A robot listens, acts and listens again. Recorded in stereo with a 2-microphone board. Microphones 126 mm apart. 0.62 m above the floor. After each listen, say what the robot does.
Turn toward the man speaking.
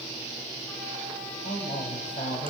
Turn 75° left.
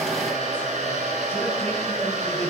Keep listening.
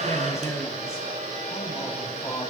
Turn 30° left.
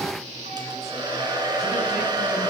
Keep listening.
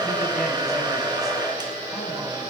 Keep listening.
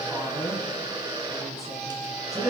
Found it: a man speaking, straight ahead.